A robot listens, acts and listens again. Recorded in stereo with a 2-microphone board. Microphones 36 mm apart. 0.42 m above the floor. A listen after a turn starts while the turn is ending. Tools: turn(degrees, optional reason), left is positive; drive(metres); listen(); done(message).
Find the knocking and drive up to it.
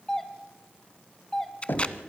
turn(degrees=65, reason="The knocking: about 65° left or 115° left.")
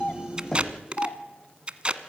turn(degrees=15, reason="So it is at 15° left.")
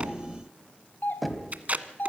drive(metres=1.0)
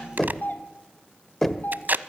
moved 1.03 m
turn(degrees=10, reason="The knocking is now 10° left.")
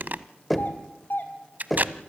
drive(metres=1.0)
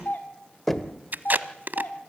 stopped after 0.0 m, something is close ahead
turn(degrees=10, reason="The knocking is now 10° left.")
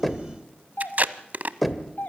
done("Arrived at the knocking, straight ahead.")